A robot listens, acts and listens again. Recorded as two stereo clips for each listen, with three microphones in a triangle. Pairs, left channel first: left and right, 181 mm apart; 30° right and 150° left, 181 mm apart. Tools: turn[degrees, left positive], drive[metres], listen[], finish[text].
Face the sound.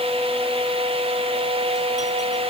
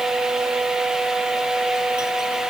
Action: listen[]
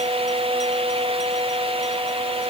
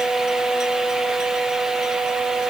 Action: listen[]
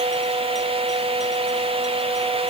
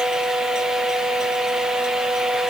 Action: finish[I can't make out anything.]